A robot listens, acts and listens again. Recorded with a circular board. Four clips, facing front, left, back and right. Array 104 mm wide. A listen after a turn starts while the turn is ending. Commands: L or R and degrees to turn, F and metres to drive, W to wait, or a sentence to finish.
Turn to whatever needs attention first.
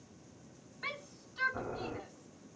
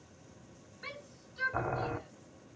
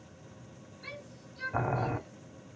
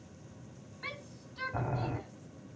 R35
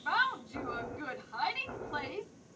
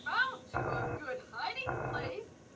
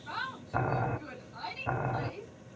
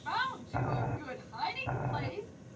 R20
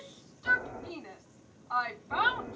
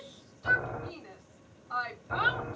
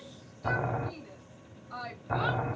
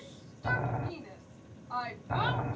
Found it: a shout, straight ahead.